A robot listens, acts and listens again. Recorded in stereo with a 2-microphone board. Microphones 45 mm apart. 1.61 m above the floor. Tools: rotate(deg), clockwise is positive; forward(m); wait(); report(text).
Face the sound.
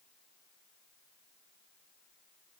wait()
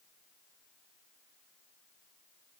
wait()
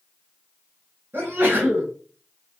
rotate(55)
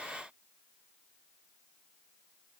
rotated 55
wait()
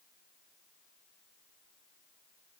report("I heard a sneeze, but can't make it out now. It was about straight ahead or 70° right.")